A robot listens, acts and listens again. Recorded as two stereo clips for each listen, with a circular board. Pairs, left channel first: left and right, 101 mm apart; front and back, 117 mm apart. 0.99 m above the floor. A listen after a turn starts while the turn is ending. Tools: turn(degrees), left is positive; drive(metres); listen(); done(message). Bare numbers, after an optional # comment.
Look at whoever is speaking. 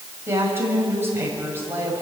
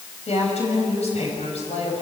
# The woman speaking: 25° right.
turn(-25)
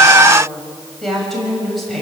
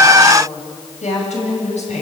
done("Facing the woman speaking.")